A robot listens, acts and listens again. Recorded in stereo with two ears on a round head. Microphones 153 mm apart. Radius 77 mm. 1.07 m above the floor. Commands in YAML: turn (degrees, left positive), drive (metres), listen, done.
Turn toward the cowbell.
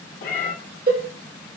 turn: -50
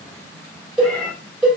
done: "Facing the cowbell, 2 to 4 m away."